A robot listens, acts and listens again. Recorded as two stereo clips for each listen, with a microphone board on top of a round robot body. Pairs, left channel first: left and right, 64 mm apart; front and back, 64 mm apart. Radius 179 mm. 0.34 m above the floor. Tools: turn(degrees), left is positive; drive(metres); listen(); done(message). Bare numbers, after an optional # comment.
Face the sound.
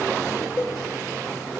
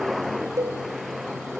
# The cowbell: 150° left.
turn(150)
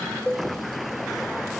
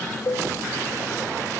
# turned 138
# The cowbell is now 15° left.
turn(15)
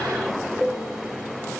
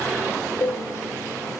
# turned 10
done("Found it: a cowbell, straight ahead, 2 to 4 m away.")